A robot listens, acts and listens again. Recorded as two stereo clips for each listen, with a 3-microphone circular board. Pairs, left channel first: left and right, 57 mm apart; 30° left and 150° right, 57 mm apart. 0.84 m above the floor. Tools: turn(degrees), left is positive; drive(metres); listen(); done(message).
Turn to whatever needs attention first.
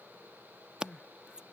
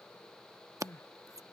turn(degrees=20)
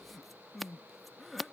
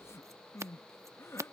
done("Found it: crying, straight ahead.")